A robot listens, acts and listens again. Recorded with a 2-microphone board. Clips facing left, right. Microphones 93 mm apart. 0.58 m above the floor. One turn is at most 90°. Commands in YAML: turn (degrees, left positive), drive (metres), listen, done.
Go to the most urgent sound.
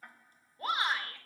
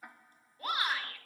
turn: 30
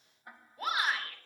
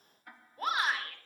drive: 1.0
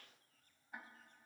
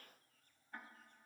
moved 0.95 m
listen: true
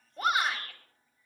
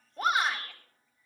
drive: 1.0
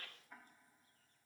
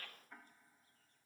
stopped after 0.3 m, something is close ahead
done: "Blocked. The shout is further on, straight ahead."